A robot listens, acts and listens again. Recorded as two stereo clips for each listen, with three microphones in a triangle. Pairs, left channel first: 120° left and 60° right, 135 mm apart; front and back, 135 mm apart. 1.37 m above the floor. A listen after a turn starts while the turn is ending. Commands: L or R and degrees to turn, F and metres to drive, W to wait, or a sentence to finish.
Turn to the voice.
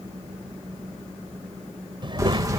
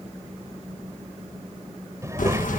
R110
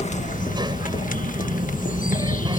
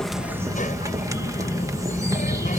Facing the child speaking.